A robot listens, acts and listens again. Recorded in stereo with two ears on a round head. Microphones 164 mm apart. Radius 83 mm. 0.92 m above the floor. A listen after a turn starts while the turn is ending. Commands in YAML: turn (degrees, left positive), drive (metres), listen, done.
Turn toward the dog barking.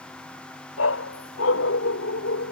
turn: 90
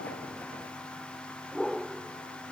done: "Found it: a dog barking, straight ahead."